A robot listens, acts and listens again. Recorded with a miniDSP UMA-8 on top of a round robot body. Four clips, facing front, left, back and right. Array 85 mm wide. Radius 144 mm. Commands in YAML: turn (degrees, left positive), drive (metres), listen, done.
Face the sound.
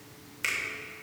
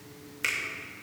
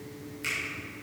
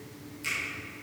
turn: 60
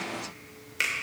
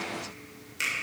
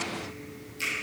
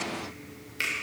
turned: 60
turn: -20
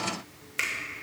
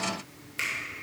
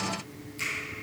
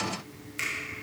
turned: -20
done: "Facing the finger snap, 2 to 4 m away."